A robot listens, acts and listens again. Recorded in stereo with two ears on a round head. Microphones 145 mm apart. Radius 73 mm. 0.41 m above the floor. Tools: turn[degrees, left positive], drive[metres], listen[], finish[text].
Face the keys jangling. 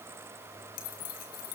Thought: The keys jangling: about 55° left or 125° left.
Action: turn[55]
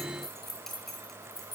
Action: finish[Found it: keys jangling, straight ahead, over 4 m away.]